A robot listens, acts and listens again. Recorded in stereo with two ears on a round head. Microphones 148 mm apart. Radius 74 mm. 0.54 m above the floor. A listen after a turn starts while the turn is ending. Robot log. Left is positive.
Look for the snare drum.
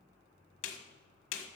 cmd yaw +90
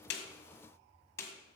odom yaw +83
note: So it is at 15° left.
cmd yaw +15
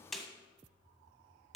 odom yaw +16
end: Found it: a snare drum, straight ahead, 1 to 2 m away.